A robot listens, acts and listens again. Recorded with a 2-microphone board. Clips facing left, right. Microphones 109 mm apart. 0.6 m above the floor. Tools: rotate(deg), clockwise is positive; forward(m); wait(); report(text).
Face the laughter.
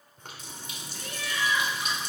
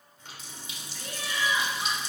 rotate(25)
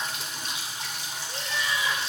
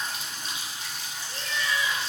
rotate(-25)
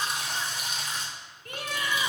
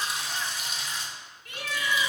rotate(-50)
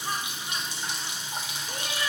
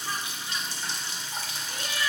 rotate(-30)
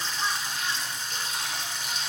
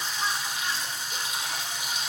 wait()
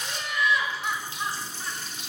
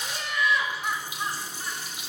report("Facing the laughter.")